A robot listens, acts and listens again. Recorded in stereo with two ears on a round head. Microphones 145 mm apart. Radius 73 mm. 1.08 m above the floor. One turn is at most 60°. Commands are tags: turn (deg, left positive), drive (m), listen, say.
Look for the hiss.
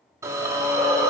<turn deg="-20"/>
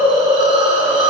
<turn deg="-60"/>
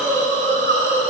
<turn deg="-60"/>
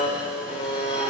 <turn deg="-25"/>
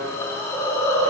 <turn deg="15"/>
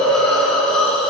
<say>Found it: a hiss, straight ahead.</say>